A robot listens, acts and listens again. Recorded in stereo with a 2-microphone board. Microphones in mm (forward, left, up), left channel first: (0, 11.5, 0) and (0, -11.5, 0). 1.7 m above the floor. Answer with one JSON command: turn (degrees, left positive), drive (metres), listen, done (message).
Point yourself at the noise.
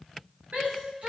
{"turn": -90}
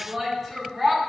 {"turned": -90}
{"done": "Facing the shout, 2 to 4 m away."}